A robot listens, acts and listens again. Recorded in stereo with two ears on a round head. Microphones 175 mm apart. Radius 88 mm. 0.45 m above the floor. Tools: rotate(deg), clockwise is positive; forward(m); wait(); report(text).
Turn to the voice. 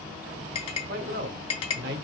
rotate(60)
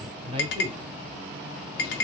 rotate(35)
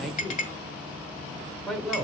report("Found it: a man speaking, straight ahead, 1 to 2 m away.")